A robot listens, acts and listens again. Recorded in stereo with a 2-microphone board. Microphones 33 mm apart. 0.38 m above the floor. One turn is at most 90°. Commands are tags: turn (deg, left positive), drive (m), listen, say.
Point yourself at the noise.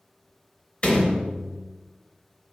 <turn deg="30"/>
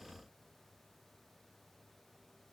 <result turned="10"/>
<listen/>
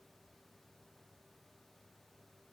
<say>I heard a door slam, but can't make it out now. It was about 20° left or 140° left.</say>